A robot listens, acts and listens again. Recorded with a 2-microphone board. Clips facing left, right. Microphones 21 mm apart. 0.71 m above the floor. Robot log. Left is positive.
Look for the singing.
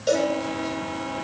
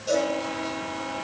cmd idle
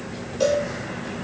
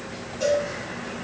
cmd idle
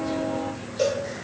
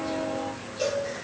end: I can't make out singing, only a cowbell.